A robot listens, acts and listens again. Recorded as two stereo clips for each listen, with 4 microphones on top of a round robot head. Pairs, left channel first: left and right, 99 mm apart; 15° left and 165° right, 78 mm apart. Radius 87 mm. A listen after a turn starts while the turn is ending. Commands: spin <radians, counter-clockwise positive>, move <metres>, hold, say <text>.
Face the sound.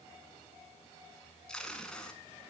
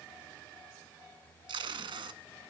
spin 3.05
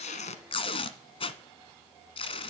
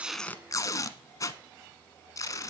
spin 1.05
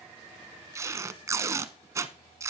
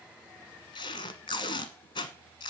spin -0.52
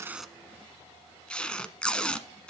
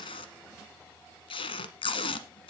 spin 0.17
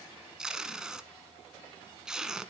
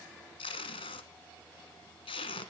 say Facing the tape being pulled, 1 to 2 m away.